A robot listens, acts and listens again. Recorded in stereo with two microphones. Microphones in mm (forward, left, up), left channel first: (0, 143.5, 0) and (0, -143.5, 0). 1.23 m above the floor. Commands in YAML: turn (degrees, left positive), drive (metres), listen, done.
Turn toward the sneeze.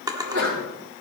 turn: -50
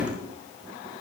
listen: true
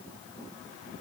done: "I heard a sneeze, but can't make it out now. It was about straight ahead or 80° right."